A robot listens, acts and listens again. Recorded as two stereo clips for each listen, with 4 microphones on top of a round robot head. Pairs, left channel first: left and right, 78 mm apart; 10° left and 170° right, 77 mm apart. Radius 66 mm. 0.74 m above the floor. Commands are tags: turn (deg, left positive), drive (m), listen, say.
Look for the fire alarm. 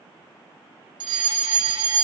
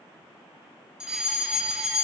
<turn deg="-90"/>
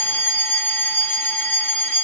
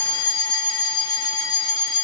<turn deg="25"/>
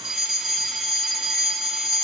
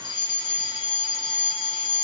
<turn deg="-10"/>
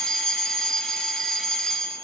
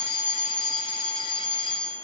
<say>Facing the fire alarm.</say>